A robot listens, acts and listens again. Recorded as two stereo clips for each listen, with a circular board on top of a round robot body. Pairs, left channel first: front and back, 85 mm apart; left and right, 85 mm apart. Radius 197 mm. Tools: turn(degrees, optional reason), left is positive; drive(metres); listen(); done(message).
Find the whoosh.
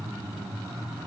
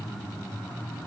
listen()
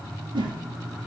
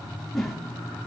turn(degrees=180, reason="The whoosh: straight behind.")
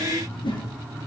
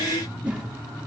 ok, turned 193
turn(degrees=-15, reason="The whoosh is now 15° right.")
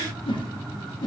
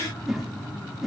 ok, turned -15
done("Found it: a whoosh, straight ahead.")